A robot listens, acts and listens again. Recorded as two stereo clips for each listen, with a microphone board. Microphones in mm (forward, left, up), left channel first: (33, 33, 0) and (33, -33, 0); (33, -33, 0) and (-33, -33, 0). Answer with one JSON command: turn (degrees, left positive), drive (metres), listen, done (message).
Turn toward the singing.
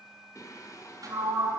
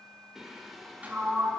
{"turn": 90}
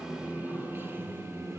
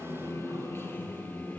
{"turn": -55}
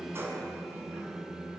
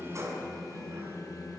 {"turn": -15}
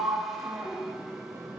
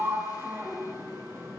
{"listen": true}
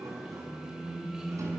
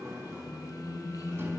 {"turn": -10}
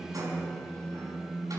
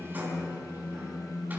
{"done": "Facing the singing."}